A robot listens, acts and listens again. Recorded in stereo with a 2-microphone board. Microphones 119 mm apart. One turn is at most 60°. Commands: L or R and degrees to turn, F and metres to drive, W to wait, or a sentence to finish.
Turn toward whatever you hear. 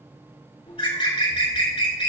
L50
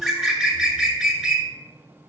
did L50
Facing the bird.